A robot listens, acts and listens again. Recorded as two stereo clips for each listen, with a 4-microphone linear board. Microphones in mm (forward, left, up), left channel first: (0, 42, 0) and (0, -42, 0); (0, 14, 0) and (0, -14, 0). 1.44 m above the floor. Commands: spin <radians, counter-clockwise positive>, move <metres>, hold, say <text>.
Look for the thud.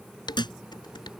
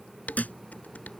spin 1.13
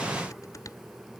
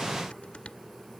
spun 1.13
hold
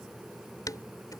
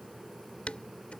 say I heard a thud, but can't make it out now. It was about straight ahead or 50° left.